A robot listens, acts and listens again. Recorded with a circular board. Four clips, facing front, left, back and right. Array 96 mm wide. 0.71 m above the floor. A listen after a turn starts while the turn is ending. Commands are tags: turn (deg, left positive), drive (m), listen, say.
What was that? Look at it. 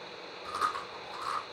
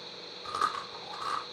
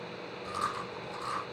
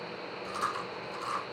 <turn deg="75"/>
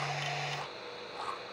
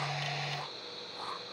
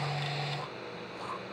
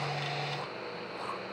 <say>Facing the chewing.</say>